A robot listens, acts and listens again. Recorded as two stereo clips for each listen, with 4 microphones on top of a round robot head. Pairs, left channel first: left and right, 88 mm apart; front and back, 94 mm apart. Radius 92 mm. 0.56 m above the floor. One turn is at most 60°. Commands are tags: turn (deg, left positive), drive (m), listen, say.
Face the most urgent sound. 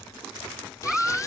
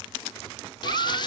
<turn deg="-60"/>
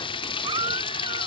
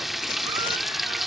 <turn deg="-60"/>
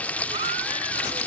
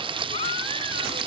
<turn deg="-45"/>
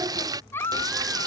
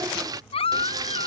<turn deg="20"/>
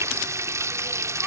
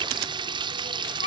<listen/>
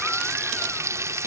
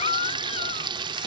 <say>Facing the baby crying.</say>